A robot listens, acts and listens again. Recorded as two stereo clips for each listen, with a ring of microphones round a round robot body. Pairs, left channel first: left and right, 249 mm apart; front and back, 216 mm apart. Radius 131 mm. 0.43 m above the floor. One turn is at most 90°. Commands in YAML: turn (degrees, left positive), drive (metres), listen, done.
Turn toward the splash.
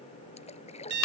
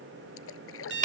turn: 25
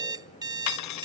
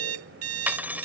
done: "I heard a splash from this way, but can't make it out now."